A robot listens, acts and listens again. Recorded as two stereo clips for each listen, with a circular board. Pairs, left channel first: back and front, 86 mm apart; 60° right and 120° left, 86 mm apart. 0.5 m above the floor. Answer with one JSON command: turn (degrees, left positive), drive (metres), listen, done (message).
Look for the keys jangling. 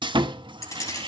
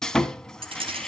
{"turn": 130}
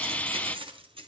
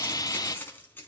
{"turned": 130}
{"turn": 10}
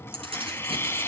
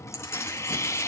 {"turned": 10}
{"done": "Facing the keys jangling."}